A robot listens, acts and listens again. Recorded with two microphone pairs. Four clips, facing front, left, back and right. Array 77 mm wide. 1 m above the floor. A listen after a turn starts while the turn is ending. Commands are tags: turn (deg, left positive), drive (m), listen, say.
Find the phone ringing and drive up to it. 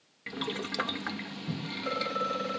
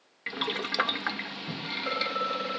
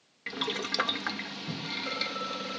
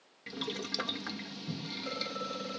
<turn deg="70"/>
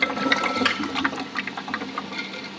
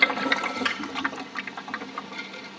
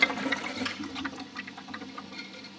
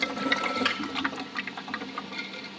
<listen/>
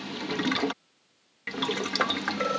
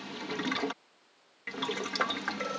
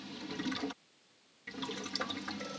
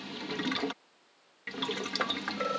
<drive m="1.0"/>
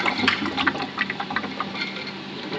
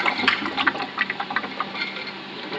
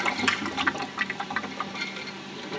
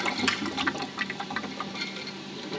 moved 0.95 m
<listen/>
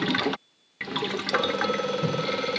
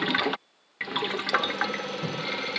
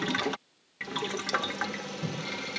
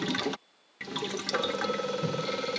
<drive m="1.0"/>
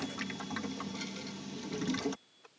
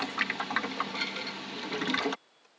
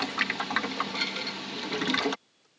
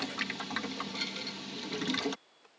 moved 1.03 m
<listen/>
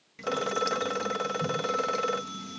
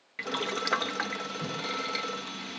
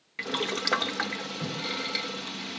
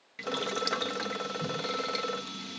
<drive m="1.0"/>
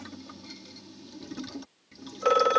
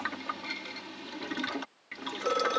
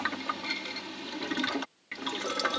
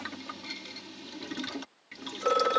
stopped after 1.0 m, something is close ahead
<say>I am next to the phone ringing.</say>